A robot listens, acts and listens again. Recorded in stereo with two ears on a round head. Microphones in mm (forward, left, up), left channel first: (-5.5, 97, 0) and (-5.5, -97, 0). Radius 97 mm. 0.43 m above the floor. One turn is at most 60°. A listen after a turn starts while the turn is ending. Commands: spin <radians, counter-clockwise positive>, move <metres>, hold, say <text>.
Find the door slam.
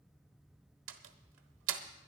spin -1.05
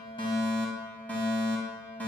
hold
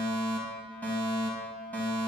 say I heard a door slam, but can't make it out now. It was about straight ahead or 60° right.